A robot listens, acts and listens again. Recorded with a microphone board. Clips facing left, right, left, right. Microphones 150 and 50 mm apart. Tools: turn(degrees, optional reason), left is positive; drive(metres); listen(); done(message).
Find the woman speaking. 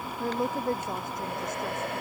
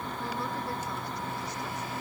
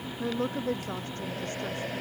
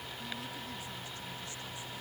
turn(degrees=50, reason="The woman speaking: about 50° left or 130° left.")
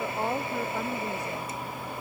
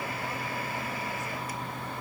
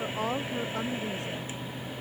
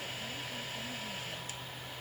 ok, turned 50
listen()
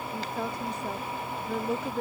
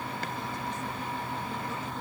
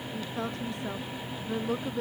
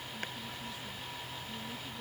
turn(degrees=70, reason="So it is at 70° left.")
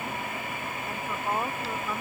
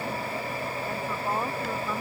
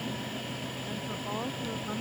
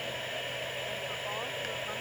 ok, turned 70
listen()
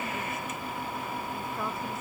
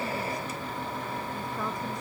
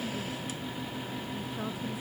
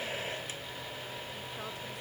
listen()
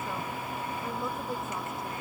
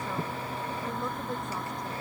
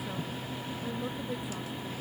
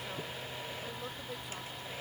done("Facing where the woman speaking came from. I can't hear it now.")